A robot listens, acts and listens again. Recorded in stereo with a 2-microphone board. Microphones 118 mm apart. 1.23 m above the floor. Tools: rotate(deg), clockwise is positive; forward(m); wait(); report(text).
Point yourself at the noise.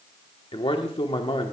rotate(-50)
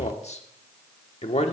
rotate(-80)
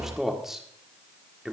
report("Found it: a man speaking, straight ahead, 1 to 2 m away.")